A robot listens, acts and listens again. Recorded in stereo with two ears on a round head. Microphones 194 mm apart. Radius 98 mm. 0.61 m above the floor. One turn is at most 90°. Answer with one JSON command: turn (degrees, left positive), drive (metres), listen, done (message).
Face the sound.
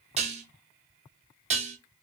{"turn": -30}
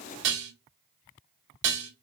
{"turn": -90}
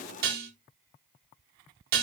{"turn": -45}
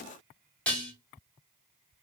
{"done": "Found it: dishes clattering, straight ahead, under 1 m away."}